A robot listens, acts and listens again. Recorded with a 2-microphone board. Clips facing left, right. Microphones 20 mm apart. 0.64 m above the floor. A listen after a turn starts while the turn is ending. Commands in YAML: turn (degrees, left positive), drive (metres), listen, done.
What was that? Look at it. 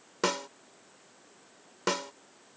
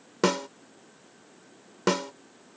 turn: -30
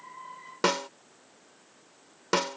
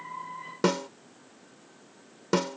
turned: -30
turn: 20
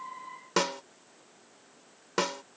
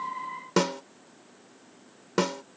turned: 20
done: "Found it: a snare drum, straight ahead."